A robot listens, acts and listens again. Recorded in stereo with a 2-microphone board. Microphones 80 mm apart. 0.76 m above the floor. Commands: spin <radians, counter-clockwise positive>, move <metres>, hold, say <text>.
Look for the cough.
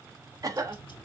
spin -0.79
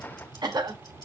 spin -1.40
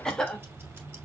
spin 0.17
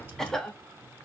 spin 0.17
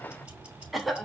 say Facing the cough, 1 to 2 m away.